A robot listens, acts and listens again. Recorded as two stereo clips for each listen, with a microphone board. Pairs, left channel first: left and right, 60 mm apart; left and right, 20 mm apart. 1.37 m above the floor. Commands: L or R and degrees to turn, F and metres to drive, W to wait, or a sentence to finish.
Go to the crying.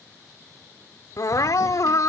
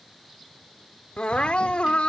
L65
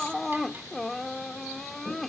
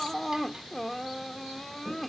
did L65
F1.0
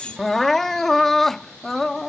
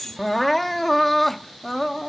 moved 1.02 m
F1.0
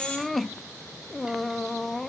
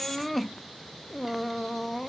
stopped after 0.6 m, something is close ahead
I am next to the crying.